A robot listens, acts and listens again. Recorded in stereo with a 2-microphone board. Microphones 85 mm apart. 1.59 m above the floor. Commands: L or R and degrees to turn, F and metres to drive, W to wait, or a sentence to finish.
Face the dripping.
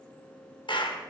W
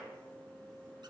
W
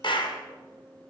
I can't make out dripping, only a clap.